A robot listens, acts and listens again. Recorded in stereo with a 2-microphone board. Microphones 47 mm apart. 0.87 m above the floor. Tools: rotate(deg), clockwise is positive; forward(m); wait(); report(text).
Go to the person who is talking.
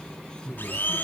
rotate(-50)
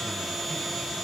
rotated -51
wait()
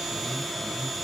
rotate(-80)
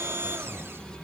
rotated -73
wait()
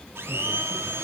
wait()
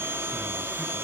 report("Facing where the man speaking came from. I can't hear it now. I did not reach it.")